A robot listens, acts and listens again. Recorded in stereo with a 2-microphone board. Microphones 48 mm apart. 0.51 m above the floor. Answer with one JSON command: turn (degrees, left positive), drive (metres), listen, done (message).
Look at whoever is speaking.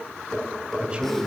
{"turn": -25}
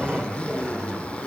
{"turn": -130}
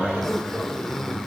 {"done": "Found it: a man speaking, straight ahead."}